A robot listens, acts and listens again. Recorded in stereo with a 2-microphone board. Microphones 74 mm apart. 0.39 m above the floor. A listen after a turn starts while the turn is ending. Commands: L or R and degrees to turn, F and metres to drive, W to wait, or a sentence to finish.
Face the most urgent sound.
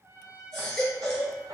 L30
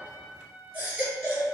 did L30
R30
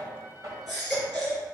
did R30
Found it: a baby crying, straight ahead.